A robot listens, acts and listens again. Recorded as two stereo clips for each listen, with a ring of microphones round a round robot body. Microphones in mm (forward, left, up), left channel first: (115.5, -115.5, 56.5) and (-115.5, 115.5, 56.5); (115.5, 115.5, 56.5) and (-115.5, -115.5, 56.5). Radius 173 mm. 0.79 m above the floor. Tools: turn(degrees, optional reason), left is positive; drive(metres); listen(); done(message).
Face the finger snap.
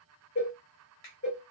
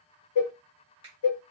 turn(degrees=-60, reason="The finger snap: 60° right.")
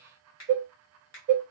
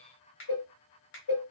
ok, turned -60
turn(degrees=10, reason="The finger snap is now 10° left.")
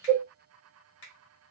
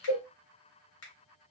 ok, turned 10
done("Found it: a finger snap, straight ahead.")